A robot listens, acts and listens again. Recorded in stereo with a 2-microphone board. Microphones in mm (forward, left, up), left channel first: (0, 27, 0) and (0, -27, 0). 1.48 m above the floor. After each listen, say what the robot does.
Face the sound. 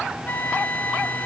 Turn 35° left.
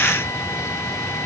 Keep listening.
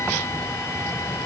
Keep listening.
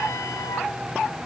I heard a flute, but can't make it out now. It was about straight ahead or 110° left.